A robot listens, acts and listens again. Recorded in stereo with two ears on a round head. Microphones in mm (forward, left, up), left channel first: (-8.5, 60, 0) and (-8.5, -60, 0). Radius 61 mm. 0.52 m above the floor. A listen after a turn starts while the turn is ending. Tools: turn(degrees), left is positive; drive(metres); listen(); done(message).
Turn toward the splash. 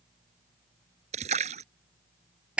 turn(degrees=-55)
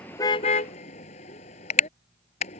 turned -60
listen()
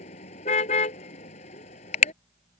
done("I heard a splash, but can't make it out now. It was about 5° left or 65° right.")